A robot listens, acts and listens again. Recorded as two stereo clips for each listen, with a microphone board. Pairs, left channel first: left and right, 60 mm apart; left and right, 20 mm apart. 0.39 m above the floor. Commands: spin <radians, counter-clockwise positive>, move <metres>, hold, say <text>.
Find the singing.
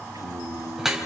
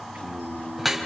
spin -1.57
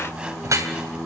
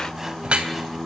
spin 0.44
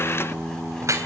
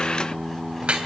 say Found it: singing, straight ahead.